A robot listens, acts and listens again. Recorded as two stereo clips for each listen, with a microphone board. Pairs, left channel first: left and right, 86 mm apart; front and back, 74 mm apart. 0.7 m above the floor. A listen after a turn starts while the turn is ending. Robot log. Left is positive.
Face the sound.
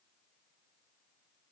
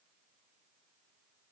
cmd idle
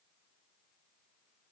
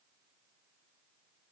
cmd idle
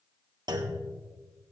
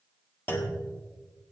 note: The clunk: 60° right.
cmd yaw -60
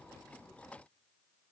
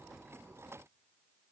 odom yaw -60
end: Facing where the clunk came from. I can't hear it now.